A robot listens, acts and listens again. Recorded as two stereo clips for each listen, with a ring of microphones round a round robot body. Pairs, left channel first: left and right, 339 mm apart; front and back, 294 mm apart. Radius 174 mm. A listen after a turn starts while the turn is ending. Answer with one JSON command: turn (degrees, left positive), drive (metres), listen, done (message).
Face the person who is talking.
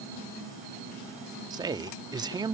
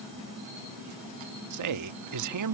{"turn": -170}
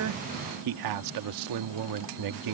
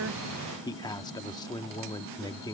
{"turn": -75}
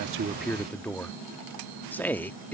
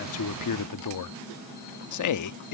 {"done": "Facing the man speaking."}